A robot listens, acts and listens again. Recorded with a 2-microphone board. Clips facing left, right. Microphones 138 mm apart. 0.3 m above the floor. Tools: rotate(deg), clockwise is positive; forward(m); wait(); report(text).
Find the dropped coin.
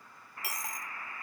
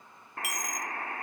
rotate(-30)
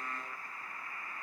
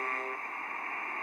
wait()
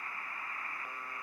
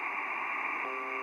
report("I heard a dropped coin, but can't make it out now. It was about straight ahead or 120° left.")